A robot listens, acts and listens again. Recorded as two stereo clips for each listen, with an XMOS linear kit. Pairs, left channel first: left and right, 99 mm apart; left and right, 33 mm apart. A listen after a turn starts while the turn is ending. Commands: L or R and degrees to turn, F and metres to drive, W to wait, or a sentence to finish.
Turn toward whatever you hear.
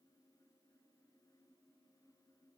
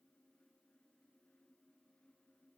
W
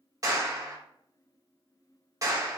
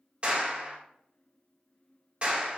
R35
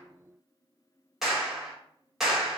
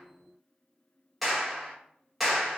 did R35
Facing the clap.